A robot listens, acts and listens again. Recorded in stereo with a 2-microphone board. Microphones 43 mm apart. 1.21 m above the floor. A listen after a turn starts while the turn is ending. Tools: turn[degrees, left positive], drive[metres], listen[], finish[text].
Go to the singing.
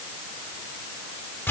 Action: listen[]
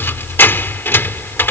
Action: listen[]
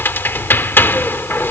Action: finish[I can't make out singing to turn to.]